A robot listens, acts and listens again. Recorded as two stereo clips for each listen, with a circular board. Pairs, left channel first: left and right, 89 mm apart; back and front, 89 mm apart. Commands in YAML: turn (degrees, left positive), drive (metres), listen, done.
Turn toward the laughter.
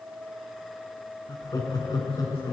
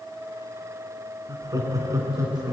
turn: 50
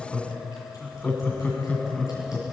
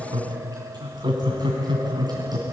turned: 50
turn: 20
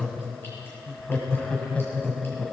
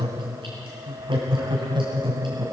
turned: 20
turn: 20
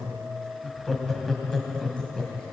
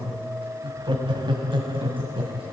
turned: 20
done: "Found it: laughter, straight ahead, 2 to 4 m away."